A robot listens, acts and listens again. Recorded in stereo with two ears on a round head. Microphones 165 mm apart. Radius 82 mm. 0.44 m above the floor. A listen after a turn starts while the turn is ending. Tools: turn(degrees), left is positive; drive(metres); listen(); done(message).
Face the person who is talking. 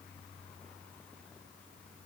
listen()
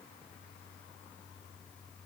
listen()
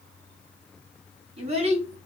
turn(degrees=-35)
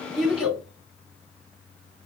done("Facing the child speaking.")